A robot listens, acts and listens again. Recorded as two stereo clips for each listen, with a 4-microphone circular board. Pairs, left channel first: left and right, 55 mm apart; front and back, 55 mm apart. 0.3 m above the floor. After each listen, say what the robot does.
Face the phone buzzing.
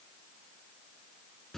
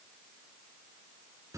Keep listening.
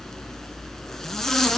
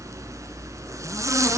Keep listening.
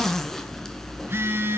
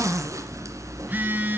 Turn 130° right.
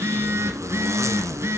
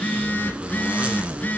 Turn 55° right.
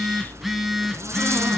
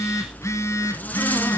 Facing the phone buzzing.